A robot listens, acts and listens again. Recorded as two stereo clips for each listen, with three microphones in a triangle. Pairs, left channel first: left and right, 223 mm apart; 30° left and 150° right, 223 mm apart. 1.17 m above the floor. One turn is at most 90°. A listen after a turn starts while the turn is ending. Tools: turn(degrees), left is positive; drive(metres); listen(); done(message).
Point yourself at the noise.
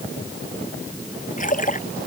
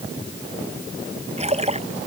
turn(degrees=90)
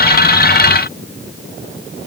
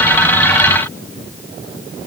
turn(degrees=55)
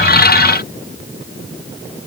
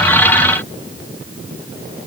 done("I heard a splash from this way, but can't make it out now.")